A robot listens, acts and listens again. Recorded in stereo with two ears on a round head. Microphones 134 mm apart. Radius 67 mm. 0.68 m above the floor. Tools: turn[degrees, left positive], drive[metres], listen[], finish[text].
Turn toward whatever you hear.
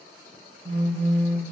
Thought: The phone buzzing: about 40° right or 140° right.
Action: turn[-40]
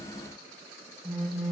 Action: finish[Found it: a phone buzzing, straight ahead, 1 to 2 m away.]